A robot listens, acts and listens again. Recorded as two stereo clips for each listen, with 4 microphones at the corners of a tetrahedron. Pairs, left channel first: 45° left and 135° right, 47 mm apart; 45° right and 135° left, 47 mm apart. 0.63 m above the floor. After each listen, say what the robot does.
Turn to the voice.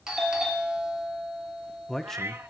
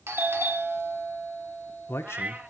Turn 40° right.
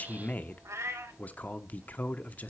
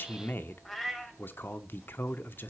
Found it: a man speaking, straight ahead.